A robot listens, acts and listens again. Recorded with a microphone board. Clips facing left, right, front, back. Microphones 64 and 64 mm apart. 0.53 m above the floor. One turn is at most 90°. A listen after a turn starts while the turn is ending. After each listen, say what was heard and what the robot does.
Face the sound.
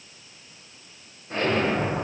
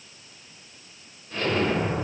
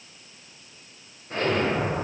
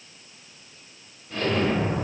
The explosion: 50° left. Turn 50° left.
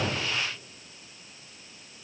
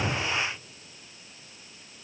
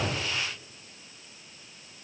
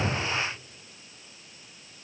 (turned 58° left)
I heard an explosion from this way, but can't make it out now.